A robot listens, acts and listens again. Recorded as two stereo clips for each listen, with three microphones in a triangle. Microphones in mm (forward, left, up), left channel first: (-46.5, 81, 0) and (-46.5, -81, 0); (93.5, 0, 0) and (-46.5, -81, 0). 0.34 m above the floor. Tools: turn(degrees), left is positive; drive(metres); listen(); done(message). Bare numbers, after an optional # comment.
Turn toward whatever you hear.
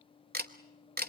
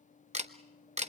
# The camera shutter: 105° right.
turn(-105)
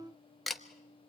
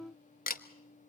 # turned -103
done("Found it: a camera shutter, straight ahead.")